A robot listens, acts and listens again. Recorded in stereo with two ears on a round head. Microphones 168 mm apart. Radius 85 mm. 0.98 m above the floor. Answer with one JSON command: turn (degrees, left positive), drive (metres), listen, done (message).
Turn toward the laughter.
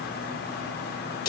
{"listen": true}
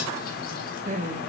{"turn": -40}
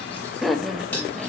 {"done": "Found it: laughter, straight ahead."}